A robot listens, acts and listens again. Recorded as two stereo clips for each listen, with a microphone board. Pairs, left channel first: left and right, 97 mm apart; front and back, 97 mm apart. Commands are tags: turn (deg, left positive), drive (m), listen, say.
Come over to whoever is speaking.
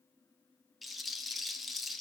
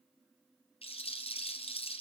<listen/>
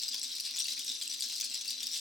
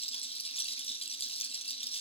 <listen/>
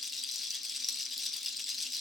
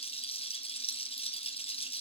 <say>I can't make out anyone speaking to turn to.</say>